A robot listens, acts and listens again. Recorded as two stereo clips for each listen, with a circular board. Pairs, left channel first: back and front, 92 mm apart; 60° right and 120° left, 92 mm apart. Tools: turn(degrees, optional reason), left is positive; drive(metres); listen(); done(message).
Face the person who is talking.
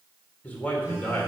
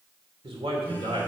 turn(degrees=110, reason="The man speaking: 110° left.")
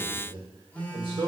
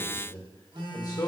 turn(degrees=-15, reason="The man speaking is now 15° right.")
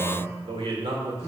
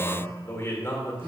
done("Facing the man speaking.")